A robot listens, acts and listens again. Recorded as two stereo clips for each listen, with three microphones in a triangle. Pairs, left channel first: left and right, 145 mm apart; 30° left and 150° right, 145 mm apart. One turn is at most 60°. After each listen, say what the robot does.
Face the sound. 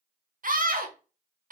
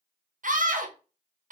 Turn 60° right.
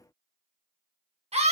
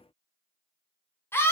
Turn 45° right.
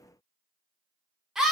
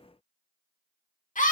Facing the scream, 1 to 2 m away.